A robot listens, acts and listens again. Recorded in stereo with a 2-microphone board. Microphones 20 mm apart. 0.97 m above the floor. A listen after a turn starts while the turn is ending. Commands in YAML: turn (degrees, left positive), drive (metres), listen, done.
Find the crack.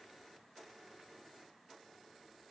listen: true
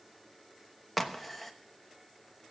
turn: 30
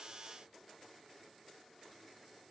listen: true
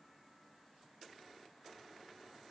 done: "I heard a crack, but can't make it out now. It was about 30° right or 150° left."